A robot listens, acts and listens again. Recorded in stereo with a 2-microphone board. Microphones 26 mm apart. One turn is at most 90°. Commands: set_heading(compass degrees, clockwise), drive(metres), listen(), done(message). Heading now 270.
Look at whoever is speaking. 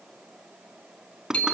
listen()
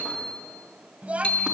set_heading(335)
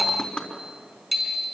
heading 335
listen()
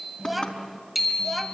done("Found it: a child speaking, straight ahead.")